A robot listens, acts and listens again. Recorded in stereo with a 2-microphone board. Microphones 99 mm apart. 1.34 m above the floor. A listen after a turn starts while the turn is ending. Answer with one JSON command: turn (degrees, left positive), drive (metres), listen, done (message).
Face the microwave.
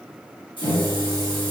{"turn": 90}
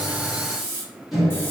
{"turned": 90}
{"done": "Found it: a microwave, straight ahead, 1 to 2 m away."}